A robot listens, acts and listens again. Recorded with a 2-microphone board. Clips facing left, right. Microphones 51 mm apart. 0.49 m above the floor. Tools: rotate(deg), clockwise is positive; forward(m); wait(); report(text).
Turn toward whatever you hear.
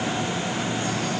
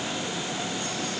wait()
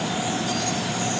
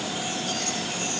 wait()
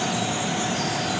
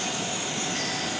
report("I can't make out anything.")